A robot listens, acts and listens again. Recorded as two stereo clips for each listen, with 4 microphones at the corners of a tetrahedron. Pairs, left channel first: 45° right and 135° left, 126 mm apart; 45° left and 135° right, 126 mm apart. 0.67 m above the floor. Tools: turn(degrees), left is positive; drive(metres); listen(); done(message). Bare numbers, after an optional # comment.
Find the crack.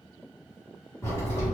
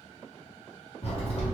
# The crack: 20° left.
turn(20)
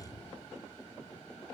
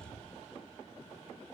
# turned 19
done("Facing where the crack came from. I can't hear it now.")